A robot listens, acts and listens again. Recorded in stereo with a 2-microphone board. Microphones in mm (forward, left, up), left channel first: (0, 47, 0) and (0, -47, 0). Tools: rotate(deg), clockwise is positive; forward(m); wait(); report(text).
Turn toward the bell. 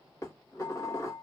wait()
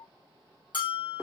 rotate(-55)
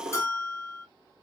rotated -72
rotate(-35)
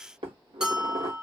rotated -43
rotate(10)
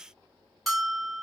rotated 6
report("Facing the bell, under 1 m away.")